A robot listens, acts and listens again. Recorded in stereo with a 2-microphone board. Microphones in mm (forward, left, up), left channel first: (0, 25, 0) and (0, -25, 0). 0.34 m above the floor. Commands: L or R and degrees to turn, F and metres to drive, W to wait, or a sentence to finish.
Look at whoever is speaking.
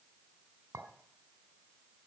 W
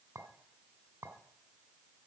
W
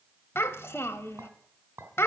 L60
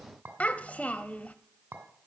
L35
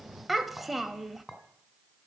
Found it: a child speaking, straight ahead.